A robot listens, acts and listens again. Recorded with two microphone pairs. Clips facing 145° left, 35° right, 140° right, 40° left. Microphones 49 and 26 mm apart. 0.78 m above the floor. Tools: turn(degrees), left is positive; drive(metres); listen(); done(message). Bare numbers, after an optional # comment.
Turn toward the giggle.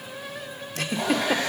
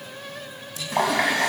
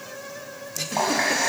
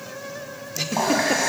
# The giggle: 115° left.
turn(115)
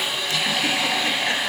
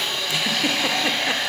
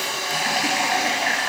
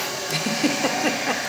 listen()
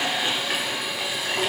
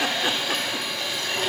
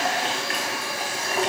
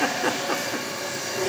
listen()
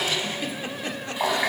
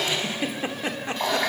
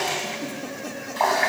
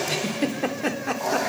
# The giggle is now 30° left.
turn(30)
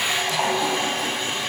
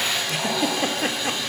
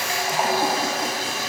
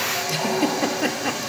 listen()
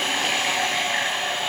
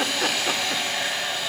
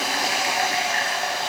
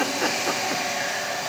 listen()
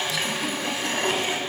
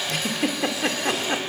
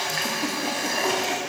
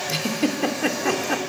done("Facing the giggle, 1 to 2 m away.")